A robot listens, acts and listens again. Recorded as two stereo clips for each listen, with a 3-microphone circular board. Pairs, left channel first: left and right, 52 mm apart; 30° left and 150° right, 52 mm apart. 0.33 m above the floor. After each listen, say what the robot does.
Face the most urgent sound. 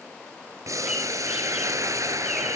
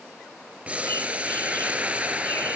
Keep listening.
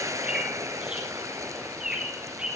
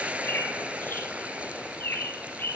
Keep listening.
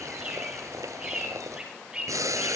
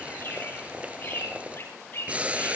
I can't make out anything urgent to turn to.